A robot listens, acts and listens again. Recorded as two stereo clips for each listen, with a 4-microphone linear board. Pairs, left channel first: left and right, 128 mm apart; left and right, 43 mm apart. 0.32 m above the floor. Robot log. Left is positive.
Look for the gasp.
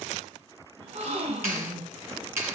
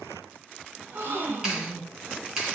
note: The gasp: about 50° right or 130° right.
cmd yaw -50
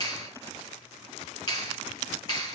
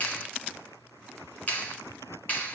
cmd idle
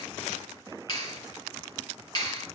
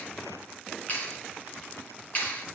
end: I heard a gasp, but can't make it out now. It was about straight ahead or 80° right.